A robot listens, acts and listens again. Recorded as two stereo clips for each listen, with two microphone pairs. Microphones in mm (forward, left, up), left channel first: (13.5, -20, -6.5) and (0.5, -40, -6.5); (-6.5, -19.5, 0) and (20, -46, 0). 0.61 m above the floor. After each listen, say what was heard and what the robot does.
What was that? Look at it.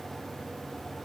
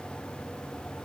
Keep listening.
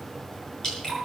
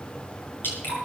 The dripping: 115° left. Turn 115° left.
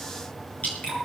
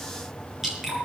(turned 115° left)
The dripping is now 35° left. Turn 35° left.
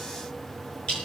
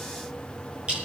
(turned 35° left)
The dripping is now 10° left. Turn 10° left.
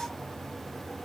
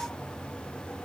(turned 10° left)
Keep listening.
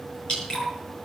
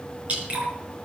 Facing the dripping.